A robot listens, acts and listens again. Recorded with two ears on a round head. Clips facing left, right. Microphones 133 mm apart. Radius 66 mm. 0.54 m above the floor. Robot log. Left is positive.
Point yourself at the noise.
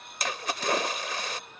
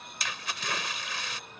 note: The splash: about 40° left or 140° left.
cmd yaw +40
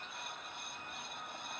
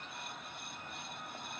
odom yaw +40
cmd idle
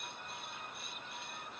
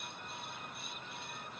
end: I heard a splash, but can't make it out now. It was about straight ahead or 100° left.